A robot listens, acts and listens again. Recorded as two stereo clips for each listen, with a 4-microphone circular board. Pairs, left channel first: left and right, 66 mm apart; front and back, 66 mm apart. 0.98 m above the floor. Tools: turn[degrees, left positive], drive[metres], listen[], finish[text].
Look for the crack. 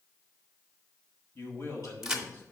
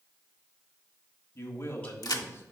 Thought: The crack: 10° right.
Action: turn[-10]
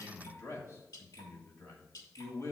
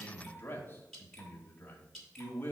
Action: finish[I heard a crack from this way, but can't make it out now.]